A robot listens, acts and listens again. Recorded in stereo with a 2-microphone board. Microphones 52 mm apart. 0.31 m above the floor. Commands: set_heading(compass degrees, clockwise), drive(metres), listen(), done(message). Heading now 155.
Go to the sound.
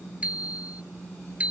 set_heading(180)
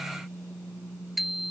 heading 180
drive(1.0)
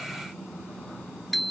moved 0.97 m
drive(1.0)
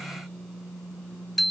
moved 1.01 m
drive(1.0)
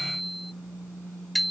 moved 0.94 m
drive(1.0)
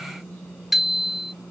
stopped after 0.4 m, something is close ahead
done("Arrived at the bicycle bell, straight ahead.")